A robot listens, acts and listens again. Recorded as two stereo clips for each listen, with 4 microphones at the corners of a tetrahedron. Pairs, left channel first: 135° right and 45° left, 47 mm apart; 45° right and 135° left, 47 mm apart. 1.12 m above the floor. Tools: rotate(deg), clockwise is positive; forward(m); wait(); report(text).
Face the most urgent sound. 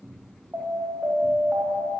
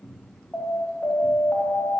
rotate(-10)
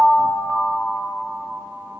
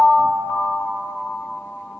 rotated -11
report("Found it: an alarm, straight ahead.")